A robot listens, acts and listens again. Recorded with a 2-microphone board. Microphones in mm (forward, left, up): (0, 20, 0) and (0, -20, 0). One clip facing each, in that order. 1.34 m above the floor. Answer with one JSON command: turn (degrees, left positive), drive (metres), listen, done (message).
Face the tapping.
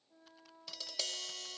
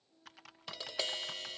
{"turn": -30}
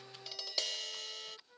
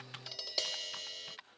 {"done": "Found it: tapping, straight ahead."}